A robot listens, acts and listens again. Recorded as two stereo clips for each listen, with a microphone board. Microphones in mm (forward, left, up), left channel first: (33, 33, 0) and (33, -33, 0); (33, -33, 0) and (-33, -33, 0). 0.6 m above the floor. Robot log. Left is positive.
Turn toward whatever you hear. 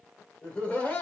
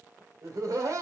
note: The laughter: 155° left.
cmd yaw +155
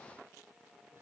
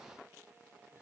cmd idle
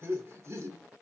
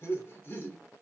note: The laughter is now 50° right.
cmd yaw -50
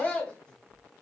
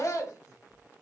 note: The laughter is now 20° left.
cmd yaw +20
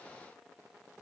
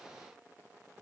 cmd idle
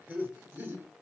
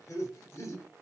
note: The laughter is now 25° right.
cmd yaw -25
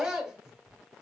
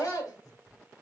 end: Facing the laughter.